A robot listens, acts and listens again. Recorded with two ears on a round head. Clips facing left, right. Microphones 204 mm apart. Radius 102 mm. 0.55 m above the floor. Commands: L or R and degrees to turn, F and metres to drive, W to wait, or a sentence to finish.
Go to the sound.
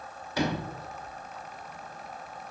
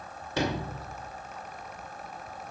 R25
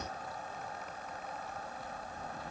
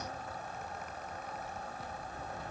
R125
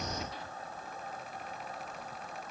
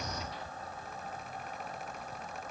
W
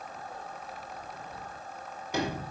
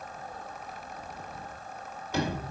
L15
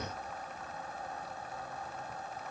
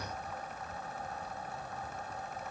W
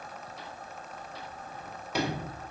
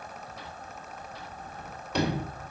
F1.0
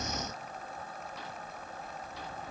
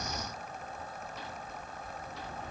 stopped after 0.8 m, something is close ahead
I am next to the sliding door.